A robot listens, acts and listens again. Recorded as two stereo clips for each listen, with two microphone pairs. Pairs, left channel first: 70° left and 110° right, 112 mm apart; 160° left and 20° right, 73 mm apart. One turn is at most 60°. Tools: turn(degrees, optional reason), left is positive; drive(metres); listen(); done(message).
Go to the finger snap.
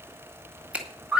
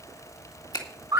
turn(degrees=60, reason="The finger snap: 170° left.")
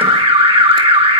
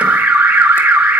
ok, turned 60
turn(degrees=60, reason="Nothing new. It was at 110° left.")
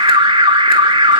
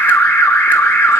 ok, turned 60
turn(degrees=50, reason="Nothing new. It was at 50° left.")
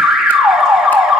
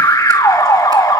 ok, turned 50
done("Facing where the finger snap came from. I can't hear it now. I did not reach it.")